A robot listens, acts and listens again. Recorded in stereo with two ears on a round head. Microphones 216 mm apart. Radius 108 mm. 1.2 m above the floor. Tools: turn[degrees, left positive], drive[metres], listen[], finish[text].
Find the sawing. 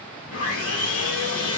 Thought: The sawing: about 55° left or 125° left.
Action: turn[55]
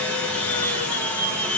Action: finish[Facing the sawing, 1 to 2 m away.]